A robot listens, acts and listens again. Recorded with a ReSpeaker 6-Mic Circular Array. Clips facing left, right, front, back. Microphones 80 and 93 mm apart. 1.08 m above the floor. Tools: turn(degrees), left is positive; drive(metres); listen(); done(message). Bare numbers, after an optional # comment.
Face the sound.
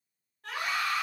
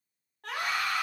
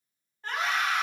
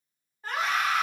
# The scream: 95° right.
turn(-95)
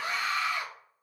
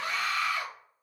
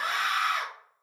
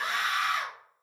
# The scream is now 20° left.
turn(20)
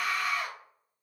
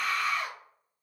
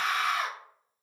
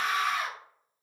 done("Facing the scream, 1 to 2 m away.")